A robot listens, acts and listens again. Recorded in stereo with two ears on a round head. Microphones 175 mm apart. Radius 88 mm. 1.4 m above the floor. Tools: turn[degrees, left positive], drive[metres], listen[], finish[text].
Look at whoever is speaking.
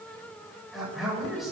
Action: turn[30]
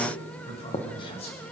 Thought: So it is at 150° left.
Action: turn[150]
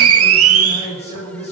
Thought: The man speaking is now 30° left.
Action: turn[30]
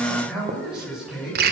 Action: finish[Facing the man speaking, over 4 m away.]